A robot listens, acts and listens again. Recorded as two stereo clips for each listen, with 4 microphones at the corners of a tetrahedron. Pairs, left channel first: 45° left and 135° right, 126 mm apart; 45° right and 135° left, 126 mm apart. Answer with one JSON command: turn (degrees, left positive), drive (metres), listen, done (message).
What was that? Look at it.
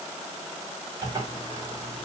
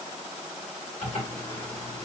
{"turn": -75}
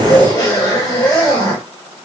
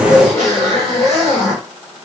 {"turn": -10}
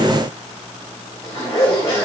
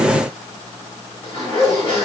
{"done": "Found it: a zipper, straight ahead."}